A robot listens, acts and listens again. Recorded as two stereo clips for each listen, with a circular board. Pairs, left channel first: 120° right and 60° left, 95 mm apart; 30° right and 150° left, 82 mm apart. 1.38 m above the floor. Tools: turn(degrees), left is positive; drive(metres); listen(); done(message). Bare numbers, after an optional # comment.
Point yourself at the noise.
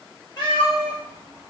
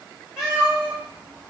# The cat meowing: 135° right.
turn(-135)
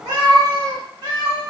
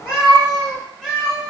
# The cat meowing is now 65° left.
turn(65)
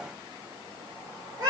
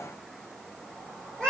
# The cat meowing is now 50° left.
turn(50)
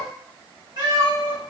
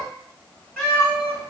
# The cat meowing is now 35° left.
turn(35)
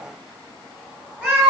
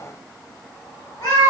# The cat meowing is now 30° right.
turn(-30)
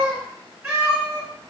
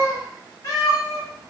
# The cat meowing is now 15° right.
turn(-15)
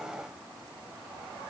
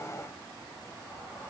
listen()
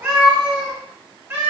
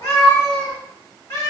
done("Found it: a cat meowing, straight ahead, 1 to 2 m away.")